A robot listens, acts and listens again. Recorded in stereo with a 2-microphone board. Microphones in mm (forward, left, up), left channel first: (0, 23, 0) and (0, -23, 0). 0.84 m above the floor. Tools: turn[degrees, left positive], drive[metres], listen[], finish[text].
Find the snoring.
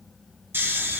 Thought: The snoring: about 50° right or 130° right.
Action: turn[-50]
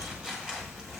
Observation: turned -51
Action: listen[]
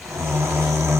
Thought: So it is at 80° right.
Action: turn[-80]
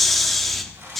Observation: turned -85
Action: finish[Facing the snoring.]